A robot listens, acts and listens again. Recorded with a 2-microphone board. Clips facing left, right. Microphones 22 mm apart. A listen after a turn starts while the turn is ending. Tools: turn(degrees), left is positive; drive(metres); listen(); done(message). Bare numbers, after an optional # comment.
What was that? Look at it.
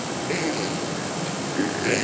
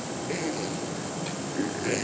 # The zipper: about 25° left or 155° left.
turn(25)
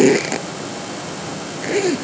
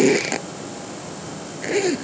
done("Found it: a zipper, straight ahead.")